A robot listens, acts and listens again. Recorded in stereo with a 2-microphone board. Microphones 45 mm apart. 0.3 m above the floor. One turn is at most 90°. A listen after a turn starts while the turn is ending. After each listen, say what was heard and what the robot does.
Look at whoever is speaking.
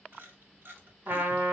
Keep listening.
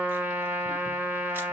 Keep listening.
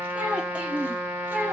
The child speaking: about 40° right or 140° right. Turn 40° right.
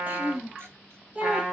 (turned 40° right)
So it is at 30° right. Turn 30° right.
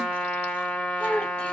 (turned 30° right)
The child speaking is now 15° left. Turn 15° left.
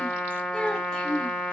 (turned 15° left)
Found it: a child speaking, straight ahead, 1 to 2 m away.